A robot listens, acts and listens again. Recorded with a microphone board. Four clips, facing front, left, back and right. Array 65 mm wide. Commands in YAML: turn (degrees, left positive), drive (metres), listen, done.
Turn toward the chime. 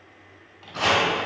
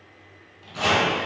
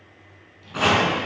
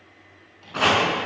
listen: true
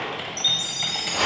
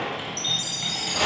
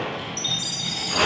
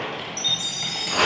turn: 140
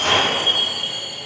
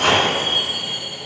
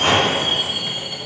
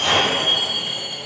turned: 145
done: "Found it: a chime, straight ahead, 1 to 2 m away."